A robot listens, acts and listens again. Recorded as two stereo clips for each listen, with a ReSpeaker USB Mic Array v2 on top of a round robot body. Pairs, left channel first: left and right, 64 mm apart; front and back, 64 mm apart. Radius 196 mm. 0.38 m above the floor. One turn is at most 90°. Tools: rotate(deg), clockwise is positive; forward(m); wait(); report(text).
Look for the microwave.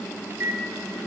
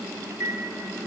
rotate(90)
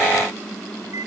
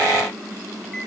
rotate(50)
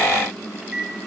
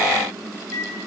rotate(15)
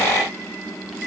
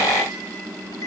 wait()
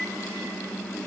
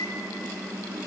wait()
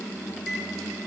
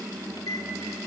report("Facing the microwave, 2 to 4 m away.")